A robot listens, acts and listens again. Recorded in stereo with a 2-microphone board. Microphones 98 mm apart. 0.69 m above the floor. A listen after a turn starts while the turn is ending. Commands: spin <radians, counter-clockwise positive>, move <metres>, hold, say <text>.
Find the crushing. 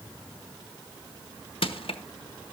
spin 1.22
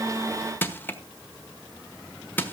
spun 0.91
spin 0.35
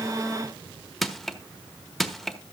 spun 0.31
say Found it: crushing, straight ahead, 1 to 2 m away.